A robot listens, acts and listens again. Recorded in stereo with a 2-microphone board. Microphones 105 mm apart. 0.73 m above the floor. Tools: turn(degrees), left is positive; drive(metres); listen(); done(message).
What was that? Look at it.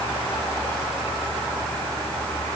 listen()
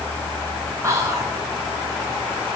turn(degrees=-30)
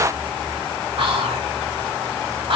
turn(degrees=-120)
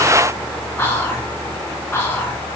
turn(degrees=25)
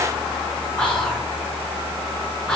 turn(degrees=10)
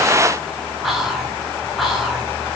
done("Facing the whispering.")